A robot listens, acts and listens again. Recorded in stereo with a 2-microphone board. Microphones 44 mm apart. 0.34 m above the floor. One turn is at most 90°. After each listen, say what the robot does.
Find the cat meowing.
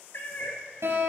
Turn 55° left.
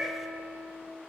Facing the cat meowing.